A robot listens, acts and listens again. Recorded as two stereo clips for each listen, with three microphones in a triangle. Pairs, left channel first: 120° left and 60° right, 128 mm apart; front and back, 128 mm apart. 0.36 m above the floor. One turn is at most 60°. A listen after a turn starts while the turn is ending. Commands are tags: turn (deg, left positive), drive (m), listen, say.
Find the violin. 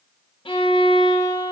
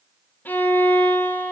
<turn deg="60"/>
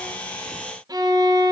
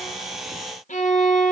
<say>Facing the violin, 1 to 2 m away.</say>